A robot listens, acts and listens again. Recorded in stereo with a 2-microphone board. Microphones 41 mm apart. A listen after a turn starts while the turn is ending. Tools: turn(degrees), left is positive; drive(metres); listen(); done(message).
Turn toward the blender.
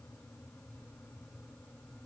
listen()
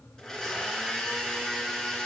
turn(degrees=30)
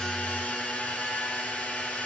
turn(degrees=135)
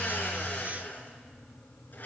turn(degrees=50)
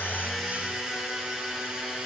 turn(degrees=-20)
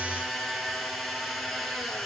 done("Facing the blender, 2 to 4 m away.")